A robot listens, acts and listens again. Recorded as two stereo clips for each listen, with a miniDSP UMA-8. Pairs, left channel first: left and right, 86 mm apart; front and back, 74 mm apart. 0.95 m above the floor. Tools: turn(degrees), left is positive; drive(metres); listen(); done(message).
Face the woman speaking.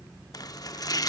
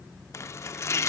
listen()
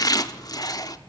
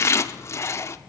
listen()
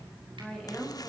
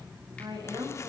turn(degrees=170)
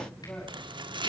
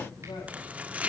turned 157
turn(degrees=15)
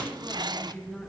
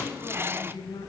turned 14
done("Facing the woman speaking.")